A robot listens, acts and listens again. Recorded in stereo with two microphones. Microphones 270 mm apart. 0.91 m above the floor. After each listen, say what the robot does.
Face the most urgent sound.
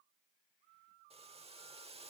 Keep listening.
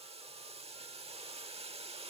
Keep listening.
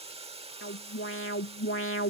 Turn 50° left.
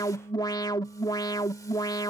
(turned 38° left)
Turn 15° left.
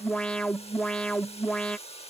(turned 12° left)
Found it: an alarm, straight ahead.